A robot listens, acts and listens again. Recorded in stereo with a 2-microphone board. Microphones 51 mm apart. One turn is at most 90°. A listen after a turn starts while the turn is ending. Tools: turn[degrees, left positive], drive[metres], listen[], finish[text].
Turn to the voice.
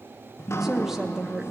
Action: turn[-30]
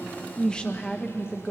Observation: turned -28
Thought: So it is at 15° left.
Action: turn[15]
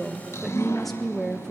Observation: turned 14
Action: finish[Found it: a woman speaking, straight ahead.]